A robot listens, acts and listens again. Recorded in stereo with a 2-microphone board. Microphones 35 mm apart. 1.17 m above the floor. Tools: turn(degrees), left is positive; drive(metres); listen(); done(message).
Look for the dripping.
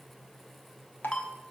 turn(degrees=65)
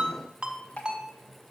turn(degrees=45)
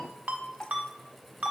turn(degrees=20)
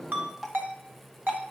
done("Facing the dripping.")